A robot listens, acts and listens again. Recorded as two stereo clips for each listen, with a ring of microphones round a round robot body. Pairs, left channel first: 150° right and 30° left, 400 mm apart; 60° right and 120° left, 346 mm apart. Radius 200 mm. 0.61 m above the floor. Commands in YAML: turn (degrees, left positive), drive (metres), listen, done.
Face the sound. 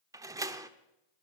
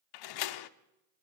turn: -50
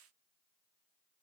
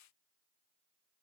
done: "Facing where the door slam came from. I can't hear it now."